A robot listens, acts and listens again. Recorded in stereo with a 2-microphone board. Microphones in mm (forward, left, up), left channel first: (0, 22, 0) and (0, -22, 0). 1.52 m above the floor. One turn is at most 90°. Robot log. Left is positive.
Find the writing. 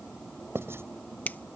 cmd yaw -90
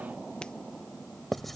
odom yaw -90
end: Found it: writing, straight ahead.